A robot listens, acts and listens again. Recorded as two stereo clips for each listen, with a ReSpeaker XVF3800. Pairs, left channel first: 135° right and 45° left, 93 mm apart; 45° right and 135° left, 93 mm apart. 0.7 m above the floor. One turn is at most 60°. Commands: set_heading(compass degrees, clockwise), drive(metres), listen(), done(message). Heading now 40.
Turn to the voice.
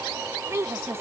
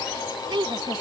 set_heading(340)
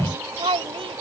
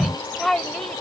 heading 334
set_heading(294)
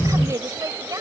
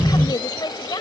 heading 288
done("Found it: a woman speaking, straight ahead.")